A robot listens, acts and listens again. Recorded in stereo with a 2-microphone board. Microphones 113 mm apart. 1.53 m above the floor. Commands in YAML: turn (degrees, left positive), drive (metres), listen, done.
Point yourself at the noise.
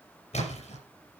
turn: 90
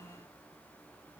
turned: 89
done: "Facing where the splash came from. I can't hear it now."